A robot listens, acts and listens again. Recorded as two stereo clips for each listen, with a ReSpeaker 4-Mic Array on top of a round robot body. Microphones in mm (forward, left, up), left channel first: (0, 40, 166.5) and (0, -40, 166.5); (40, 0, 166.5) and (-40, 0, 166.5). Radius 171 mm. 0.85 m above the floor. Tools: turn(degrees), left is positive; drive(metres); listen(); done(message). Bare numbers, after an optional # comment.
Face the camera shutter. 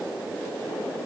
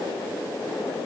listen()
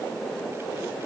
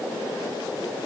listen()
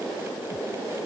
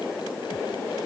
done("I can't make out a camera shutter.")